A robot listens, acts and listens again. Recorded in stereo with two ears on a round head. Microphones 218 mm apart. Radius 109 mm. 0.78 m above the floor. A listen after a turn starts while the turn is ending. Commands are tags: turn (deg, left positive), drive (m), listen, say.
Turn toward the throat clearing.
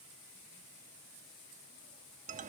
<listen/>
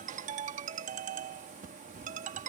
<listen/>
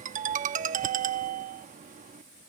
<say>I can't make out throat clearing to turn to.</say>